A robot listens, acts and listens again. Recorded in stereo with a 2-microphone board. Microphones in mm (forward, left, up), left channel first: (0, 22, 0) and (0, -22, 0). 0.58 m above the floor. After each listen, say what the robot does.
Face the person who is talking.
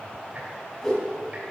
Keep listening.
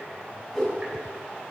Keep listening.
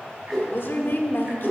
Turn 55° left.
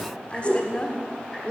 Turn 35° left.
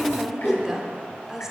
Turn 15° right.
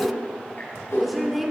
Found it: a woman speaking, straight ahead.